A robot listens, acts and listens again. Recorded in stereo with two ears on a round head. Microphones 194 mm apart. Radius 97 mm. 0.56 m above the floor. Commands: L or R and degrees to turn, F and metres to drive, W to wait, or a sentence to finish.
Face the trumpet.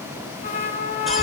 L35
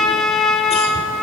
Found it: a trumpet, straight ahead, 1 to 2 m away.